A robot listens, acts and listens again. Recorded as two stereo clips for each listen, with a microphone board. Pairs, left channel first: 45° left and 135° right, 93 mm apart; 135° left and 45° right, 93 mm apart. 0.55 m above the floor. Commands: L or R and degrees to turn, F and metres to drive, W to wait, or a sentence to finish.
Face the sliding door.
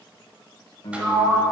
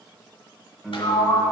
L150
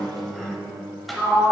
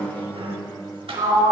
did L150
R45
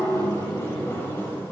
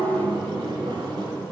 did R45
R20
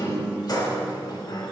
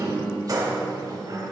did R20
Found it: a sliding door, straight ahead.